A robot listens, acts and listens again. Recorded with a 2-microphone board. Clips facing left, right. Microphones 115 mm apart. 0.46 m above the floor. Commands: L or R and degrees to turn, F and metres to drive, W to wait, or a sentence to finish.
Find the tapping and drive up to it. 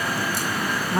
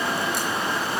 W
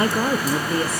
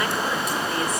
W
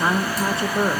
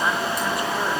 I can't make out tapping to turn to.